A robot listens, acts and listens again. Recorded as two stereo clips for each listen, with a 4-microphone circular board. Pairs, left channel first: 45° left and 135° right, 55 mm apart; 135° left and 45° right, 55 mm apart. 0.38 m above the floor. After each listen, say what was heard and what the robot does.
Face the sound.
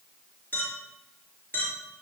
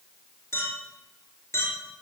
The clink: 100° left. Turn 100° left.
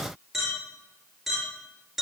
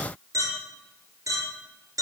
The clink is now 45° right. Turn 45° right.
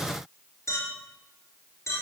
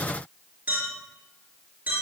The clink is now 15° left. Turn 15° left.
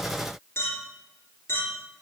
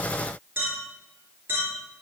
Found it: a clink, straight ahead, over 4 m away.